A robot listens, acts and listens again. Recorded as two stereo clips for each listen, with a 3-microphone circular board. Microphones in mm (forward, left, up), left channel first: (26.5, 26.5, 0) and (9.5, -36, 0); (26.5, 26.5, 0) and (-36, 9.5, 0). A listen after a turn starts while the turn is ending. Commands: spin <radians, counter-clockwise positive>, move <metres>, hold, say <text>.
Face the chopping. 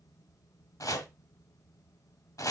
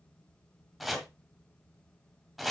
spin 1.83
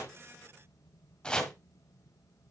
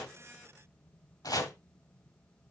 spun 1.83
say Facing the chopping, 1 to 2 m away.